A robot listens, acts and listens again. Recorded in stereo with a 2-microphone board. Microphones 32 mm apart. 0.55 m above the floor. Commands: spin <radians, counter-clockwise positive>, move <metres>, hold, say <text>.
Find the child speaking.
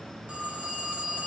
hold
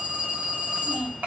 spin -1.22
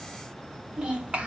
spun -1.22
spin -0.70
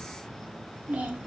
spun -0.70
spin -0.87
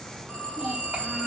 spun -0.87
hold
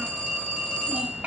spin -0.96
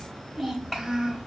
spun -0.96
say Found it: a child speaking, straight ahead, 1 to 2 m away.